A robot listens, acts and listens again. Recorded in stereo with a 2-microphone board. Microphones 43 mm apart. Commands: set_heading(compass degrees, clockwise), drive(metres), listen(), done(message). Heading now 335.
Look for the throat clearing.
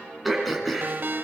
set_heading(305)
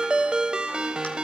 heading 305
listen()
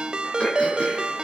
listen()
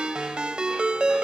done("I heard throat clearing, but can't make it out now. It was about 30° right or 150° left.")